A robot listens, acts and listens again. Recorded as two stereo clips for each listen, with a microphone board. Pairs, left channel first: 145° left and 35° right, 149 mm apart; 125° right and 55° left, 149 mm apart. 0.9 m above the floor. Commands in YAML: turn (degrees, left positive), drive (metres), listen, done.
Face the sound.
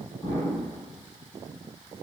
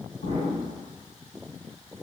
turn: -150
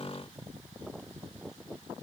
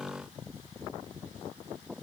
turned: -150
done: "Facing where the explosion came from. I can't hear it now."